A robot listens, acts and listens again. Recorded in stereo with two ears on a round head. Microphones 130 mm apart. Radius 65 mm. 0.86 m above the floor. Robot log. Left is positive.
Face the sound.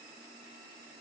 cmd idle
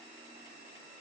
cmd idle
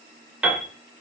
cmd yaw -30
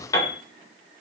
note: So it is at 25° left.
cmd yaw +25
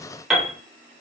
end: Found it: a piano, straight ahead, 2 to 4 m away.